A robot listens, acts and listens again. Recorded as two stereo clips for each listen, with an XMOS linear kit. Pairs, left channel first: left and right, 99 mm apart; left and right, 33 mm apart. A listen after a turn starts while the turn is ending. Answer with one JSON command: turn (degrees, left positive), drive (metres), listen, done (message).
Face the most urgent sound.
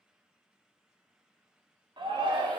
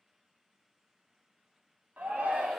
{"turn": -55}
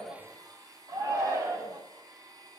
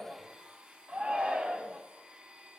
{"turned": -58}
{"turn": -50}
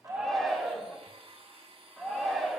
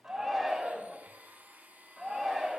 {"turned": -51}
{"done": "Found it: a shout, straight ahead, 1 to 2 m away."}